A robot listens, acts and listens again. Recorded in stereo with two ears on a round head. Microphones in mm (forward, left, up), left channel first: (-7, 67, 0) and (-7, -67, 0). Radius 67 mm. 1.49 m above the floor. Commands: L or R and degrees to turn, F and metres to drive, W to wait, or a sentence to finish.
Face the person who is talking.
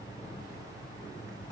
W
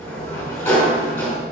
W
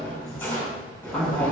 L30
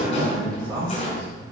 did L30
R25
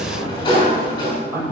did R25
R20
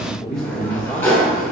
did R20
Facing the man speaking, over 4 m away.